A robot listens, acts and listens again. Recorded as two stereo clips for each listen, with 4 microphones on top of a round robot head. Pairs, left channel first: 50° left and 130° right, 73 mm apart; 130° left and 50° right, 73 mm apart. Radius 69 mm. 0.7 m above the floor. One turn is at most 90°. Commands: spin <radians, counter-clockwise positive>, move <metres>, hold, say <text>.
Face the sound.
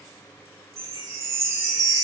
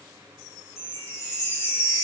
spin 1.57
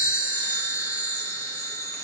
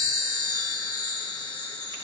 spin 1.57
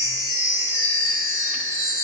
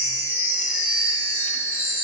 spin 0.17
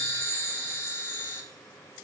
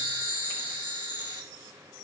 say Facing the chime, 2 to 4 m away.